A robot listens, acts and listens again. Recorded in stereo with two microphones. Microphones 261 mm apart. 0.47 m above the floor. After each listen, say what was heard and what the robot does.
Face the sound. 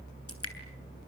The dripping: about 65° left or 115° left. Turn 65° left.
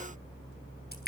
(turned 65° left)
So it is at 40° left. Turn 40° left.
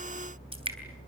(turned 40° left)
The dripping is now 20° right. Turn 20° right.
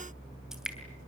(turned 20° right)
Found it: dripping, straight ahead, 2 to 4 m away.